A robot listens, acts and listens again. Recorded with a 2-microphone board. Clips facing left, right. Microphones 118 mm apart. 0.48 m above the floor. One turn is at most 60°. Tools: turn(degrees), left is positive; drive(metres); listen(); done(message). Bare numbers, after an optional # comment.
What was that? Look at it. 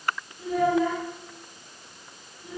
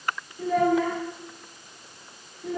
turn(-60)
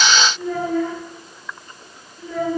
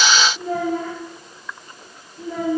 # So it is at 30° right.
turn(-30)
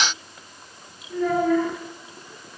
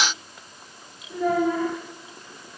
# The child speaking is now 15° right.
turn(-15)
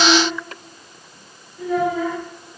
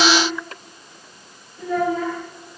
done("Found it: a child speaking, straight ahead, over 4 m away.")